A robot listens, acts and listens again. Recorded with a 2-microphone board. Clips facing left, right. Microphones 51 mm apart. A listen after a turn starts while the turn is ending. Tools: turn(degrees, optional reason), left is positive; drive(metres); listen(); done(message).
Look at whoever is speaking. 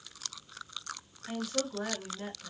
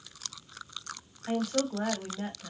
turn(degrees=-50, reason="The woman speaking: about 50° right or 130° right.")
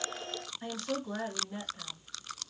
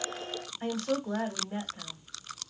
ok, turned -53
turn(degrees=-60, reason="So it is at 60° right.")
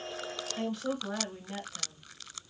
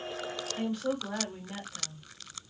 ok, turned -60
done("Facing the woman speaking, 1 to 2 m away.")